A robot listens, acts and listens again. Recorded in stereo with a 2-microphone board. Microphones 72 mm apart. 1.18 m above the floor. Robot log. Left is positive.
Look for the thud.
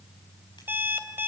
cmd idle
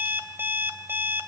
cmd idle
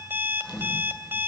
cmd yaw +30
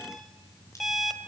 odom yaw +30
cmd idle
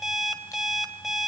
end: I heard a thud, but can't make it out now. It was about 20° right or 140° left.